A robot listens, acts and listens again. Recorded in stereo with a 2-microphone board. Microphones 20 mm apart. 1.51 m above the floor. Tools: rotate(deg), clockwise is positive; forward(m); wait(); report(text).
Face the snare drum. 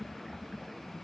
wait()
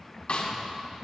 rotate(-65)
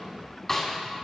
rotate(-15)
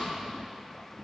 wait()
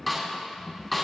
report("Facing the snare drum.")